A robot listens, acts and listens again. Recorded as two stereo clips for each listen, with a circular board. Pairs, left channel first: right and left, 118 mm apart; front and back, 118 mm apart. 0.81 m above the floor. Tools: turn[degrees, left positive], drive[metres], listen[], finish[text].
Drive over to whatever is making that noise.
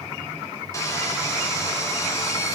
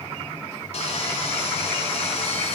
Thought: The sawing: 25° right.
Action: turn[-25]
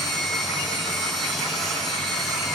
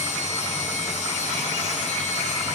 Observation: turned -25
Action: drive[1.0]
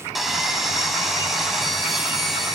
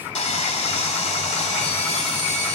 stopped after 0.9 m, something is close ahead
Action: finish[Arrived at the sawing, straight ahead.]